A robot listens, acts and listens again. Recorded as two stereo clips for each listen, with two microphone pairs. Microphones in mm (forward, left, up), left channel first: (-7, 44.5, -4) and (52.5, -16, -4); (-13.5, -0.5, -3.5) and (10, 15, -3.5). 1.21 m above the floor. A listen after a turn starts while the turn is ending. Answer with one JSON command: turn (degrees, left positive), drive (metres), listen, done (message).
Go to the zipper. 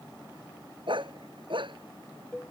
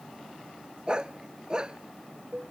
{"listen": true}
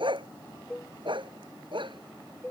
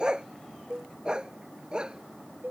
{"listen": true}
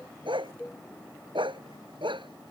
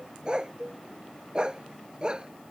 {"done": "I can't make out a zipper, only a dog barking and a cowbell."}